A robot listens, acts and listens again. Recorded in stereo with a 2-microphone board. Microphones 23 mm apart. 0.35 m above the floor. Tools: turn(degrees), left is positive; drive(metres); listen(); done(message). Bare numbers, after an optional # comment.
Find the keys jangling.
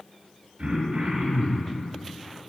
listen()
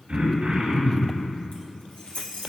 turn(90)
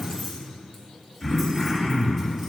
listen()
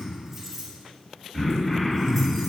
done("Found it: keys jangling, straight ahead.")